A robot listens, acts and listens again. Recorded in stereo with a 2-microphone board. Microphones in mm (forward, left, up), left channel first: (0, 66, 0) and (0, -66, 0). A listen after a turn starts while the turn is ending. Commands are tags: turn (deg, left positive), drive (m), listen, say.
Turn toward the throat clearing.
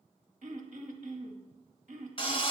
<turn deg="-70"/>
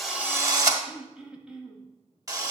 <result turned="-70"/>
<say>Found it: throat clearing, straight ahead, 1 to 2 m away.</say>